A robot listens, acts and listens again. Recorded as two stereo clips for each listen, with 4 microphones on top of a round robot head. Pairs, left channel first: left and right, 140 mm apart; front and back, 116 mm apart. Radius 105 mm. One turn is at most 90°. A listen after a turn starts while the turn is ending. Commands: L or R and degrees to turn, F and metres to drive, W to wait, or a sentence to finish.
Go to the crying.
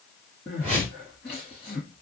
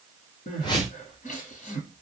F1.0
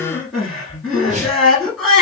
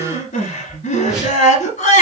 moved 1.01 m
F1.0
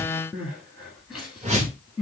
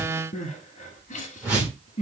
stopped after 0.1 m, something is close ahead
I am next to the crying.